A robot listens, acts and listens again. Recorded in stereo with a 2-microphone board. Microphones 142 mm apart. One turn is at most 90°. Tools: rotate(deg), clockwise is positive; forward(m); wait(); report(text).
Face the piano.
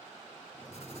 wait()
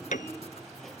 rotate(-75)
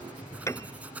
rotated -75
rotate(-25)
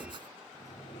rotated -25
wait()
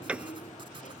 rotate(10)
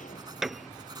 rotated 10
report("Facing the piano.")